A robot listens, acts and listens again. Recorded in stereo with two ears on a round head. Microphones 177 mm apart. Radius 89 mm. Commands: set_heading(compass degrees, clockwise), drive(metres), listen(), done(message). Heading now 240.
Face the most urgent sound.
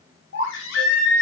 set_heading(170)
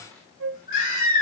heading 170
set_heading(130)
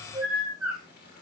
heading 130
done("Found it: a baby crying, straight ahead, over 4 m away.")